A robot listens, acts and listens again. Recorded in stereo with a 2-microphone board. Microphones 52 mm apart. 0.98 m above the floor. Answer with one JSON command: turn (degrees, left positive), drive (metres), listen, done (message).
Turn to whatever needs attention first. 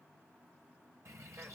{"listen": true}
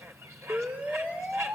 {"turn": -20}
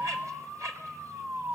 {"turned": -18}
{"turn": -145}
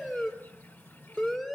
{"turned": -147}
{"done": "Facing the siren, 2 to 4 m away."}